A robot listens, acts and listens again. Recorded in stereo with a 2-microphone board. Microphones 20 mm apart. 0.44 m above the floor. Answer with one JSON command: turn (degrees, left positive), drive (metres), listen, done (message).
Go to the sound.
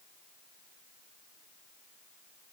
{"listen": true}
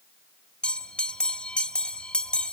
{"turn": 55}
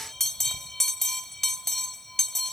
{"turn": 15}
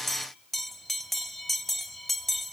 {"drive": 1.0}
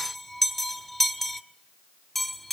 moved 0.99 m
{"drive": 1.0}
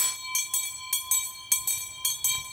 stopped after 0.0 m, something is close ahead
{"done": "I am next to the bell."}